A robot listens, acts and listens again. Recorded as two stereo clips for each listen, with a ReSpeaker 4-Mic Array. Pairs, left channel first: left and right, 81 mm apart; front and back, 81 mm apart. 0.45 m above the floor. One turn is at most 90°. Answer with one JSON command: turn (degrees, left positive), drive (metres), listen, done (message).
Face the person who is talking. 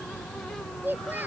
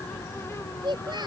{"turn": -90}
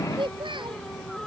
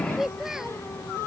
{"turn": -90}
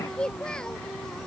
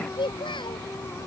{"turn": 10}
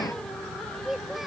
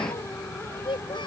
{"done": "Found it: a child speaking, straight ahead."}